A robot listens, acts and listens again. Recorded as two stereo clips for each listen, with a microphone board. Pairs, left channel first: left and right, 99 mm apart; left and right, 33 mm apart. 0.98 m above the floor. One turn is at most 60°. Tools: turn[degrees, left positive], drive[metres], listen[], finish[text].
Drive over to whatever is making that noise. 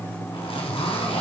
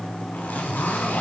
Action: turn[60]
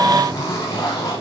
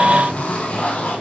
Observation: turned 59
Thought: So it is at 35° left.
Action: turn[35]
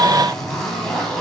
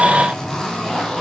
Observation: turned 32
Action: drive[1.0]
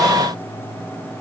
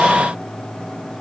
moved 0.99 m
Action: listen[]
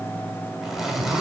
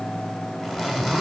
Action: drive[1.0]
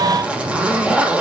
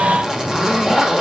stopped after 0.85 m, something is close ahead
Thought: The zipper is now 15° right.
Action: turn[-15]
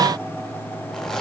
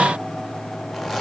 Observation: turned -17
Action: listen[]
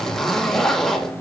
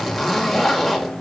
Action: finish[I am next to the zipper.]